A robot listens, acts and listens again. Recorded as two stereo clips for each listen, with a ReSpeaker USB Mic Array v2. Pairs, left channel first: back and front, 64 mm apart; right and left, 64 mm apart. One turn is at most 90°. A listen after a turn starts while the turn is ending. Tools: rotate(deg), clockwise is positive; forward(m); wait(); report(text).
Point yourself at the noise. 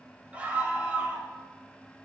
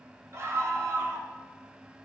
rotate(-65)
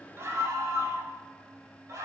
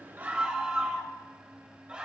rotate(-20)
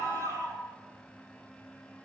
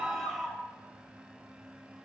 report("Found it: a scream, straight ahead, 2 to 4 m away.")